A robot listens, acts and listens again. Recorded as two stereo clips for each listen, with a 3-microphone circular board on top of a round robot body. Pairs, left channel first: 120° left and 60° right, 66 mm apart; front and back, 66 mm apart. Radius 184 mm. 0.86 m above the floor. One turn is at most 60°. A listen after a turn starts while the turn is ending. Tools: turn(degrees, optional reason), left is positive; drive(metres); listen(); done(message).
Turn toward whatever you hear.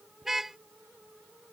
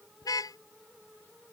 turn(degrees=25, reason="The car horn: 25° left.")
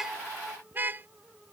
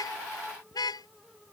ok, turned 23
done("Facing the car horn.")